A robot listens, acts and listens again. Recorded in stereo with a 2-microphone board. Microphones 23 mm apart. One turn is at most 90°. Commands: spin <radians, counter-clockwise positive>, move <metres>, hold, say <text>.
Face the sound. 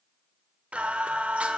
spin -1.57
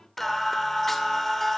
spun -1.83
spin 0.26
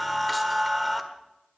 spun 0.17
say Found it: singing, straight ahead, 1 to 2 m away.